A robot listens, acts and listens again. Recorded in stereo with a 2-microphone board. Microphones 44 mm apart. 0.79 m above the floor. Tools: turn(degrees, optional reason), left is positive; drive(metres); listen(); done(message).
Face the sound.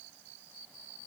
listen()
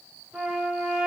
turn(degrees=-15, reason="The trumpet: about 15° right or 165° right.")
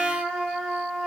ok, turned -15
done("Facing the trumpet.")